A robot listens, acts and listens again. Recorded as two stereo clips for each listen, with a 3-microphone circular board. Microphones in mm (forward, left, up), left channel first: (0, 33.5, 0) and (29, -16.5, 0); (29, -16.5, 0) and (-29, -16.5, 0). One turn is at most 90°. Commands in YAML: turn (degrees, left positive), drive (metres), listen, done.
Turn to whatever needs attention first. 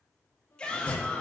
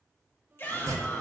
turn: 50
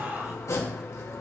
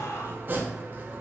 done: "Facing the shout, 2 to 4 m away."